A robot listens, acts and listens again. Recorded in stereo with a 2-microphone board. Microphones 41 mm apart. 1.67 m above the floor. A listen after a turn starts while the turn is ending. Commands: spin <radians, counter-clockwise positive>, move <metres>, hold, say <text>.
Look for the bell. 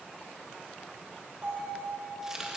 spin -1.13
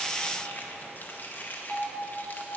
say Facing the bell, 2 to 4 m away.